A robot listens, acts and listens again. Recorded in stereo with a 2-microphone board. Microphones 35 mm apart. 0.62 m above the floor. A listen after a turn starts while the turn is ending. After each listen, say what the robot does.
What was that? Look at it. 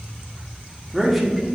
Turn 30° left.
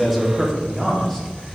Turn 30° left.
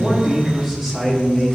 Turn 30° left.
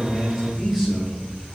Turn 30° right.
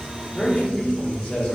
Turn 25° left.
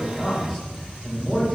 Facing the man speaking.